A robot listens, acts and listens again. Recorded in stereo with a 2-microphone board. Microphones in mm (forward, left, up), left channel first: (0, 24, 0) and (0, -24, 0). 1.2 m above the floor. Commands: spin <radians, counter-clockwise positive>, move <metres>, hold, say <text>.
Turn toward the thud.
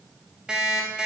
hold
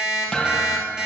spin 0.35
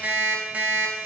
hold
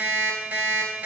say I heard a thud, but can't make it out now. It was about straight ahead or 140° left.